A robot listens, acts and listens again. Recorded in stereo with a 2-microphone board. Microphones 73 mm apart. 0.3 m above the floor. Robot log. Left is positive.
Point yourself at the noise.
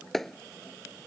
cmd yaw +30
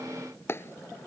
note: So it is at 145° left.
cmd yaw +145
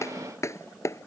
note: The clap is now 40° left.
cmd yaw +40
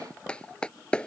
note: The clap is now 15° left.
cmd yaw +15
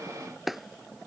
end: Facing the clap.